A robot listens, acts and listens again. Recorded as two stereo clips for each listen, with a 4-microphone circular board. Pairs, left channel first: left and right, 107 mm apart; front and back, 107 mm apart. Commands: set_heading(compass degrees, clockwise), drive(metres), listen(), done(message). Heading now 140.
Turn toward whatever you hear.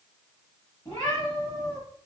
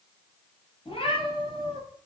set_heading(100)
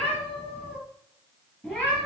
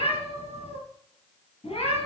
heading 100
set_heading(85)
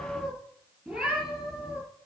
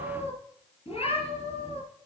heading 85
done("Found it: a cat meowing, straight ahead, over 4 m away.")